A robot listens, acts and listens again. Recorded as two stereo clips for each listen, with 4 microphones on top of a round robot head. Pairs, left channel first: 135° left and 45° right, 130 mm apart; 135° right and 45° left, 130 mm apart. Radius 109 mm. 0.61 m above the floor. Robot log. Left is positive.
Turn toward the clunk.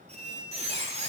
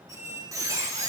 cmd idle
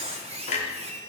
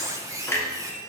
note: The clunk: 155° left.
cmd yaw +155
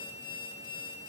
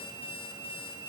end: I heard a clunk from this way, but can't make it out now.